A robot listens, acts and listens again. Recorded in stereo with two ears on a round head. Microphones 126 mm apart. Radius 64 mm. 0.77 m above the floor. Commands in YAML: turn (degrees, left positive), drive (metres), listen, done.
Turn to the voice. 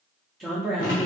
turn: 30
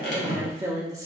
turn: -25
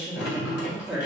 turn: -10
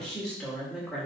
done: "Facing the woman speaking."